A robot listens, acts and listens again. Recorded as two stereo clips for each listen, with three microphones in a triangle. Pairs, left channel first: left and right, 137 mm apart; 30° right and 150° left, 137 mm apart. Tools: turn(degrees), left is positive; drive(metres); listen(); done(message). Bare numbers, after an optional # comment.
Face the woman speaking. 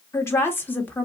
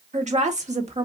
# The woman speaking: 165° left.
turn(165)
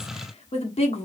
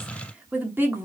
# The woman speaking is now 85° left.
turn(85)
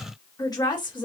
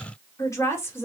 # The woman speaking is now 40° left.
turn(40)
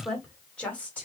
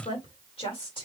# The woman speaking is now 15° left.
turn(15)
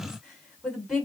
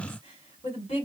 done("Found it: a woman speaking, straight ahead.")